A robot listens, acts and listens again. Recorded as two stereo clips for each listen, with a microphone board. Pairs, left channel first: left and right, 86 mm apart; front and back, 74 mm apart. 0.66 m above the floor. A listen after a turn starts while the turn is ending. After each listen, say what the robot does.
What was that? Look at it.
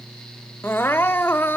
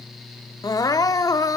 Turn 25° left.
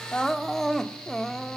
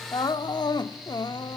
Facing the crying.